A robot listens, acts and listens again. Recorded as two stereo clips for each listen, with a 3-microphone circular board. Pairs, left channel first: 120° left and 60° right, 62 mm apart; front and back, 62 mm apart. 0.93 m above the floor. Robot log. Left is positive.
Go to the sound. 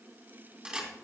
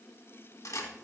note: The camera shutter: 15° left.
cmd yaw +15
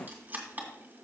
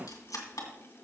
cmd fwd 1.0
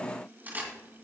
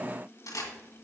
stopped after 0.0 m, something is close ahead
end: Blocked. The camera shutter is further on, straight ahead.